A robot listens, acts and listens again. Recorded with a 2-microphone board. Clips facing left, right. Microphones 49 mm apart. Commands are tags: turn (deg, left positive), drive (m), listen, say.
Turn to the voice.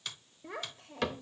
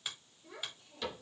<turn deg="65"/>
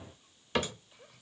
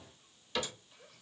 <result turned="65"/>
<turn deg="10"/>
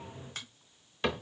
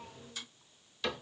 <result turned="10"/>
<listen/>
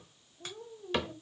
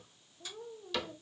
<say>Found it: a child speaking, straight ahead.</say>